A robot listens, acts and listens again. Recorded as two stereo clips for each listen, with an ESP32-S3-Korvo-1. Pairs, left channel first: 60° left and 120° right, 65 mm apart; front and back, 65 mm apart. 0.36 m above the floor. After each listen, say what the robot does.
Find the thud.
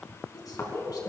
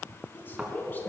Turn 110° left.
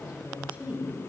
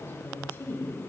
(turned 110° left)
Facing where the thud came from. I can't hear it now.